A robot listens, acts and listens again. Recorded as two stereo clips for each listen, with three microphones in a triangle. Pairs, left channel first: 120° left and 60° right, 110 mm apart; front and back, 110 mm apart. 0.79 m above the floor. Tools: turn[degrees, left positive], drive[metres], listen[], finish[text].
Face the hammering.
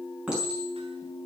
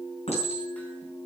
Action: listen[]
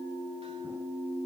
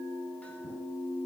Action: listen[]
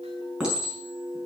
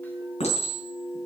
Action: finish[I can't make out hammering to turn to.]